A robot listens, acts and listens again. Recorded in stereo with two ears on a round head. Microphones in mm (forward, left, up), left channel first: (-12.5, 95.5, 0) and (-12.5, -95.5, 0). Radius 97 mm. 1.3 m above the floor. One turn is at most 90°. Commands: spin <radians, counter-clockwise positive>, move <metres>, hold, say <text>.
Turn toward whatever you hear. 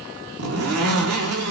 spin -1.57
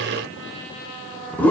say Found it: a zipper, straight ahead, 2 to 4 m away.